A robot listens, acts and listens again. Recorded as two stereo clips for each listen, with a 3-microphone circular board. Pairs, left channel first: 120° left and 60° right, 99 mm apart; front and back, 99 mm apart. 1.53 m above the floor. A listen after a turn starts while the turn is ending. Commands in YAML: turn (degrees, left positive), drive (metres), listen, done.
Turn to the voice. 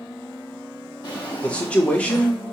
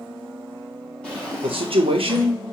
turn: -165
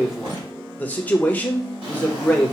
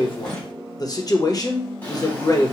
turn: 45
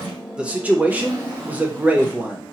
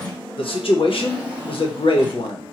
turn: 15
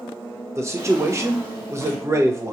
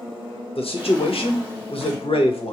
done: "Found it: a man speaking, straight ahead."